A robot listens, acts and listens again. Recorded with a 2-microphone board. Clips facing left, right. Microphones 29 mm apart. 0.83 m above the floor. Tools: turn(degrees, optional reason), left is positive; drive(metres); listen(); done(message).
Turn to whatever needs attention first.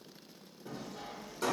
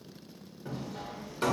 listen()
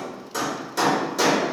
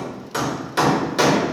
listen()
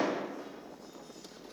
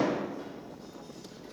done("I can't make out anything urgent, only hammering.")